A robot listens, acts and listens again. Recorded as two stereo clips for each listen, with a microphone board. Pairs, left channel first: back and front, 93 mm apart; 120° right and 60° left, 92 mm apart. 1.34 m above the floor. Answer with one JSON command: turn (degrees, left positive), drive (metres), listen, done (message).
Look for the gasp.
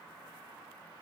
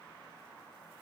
{"listen": true}
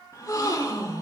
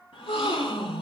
{"turn": -130}
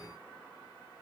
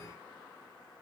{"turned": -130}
{"done": "Facing where the gasp came from. I can't hear it now."}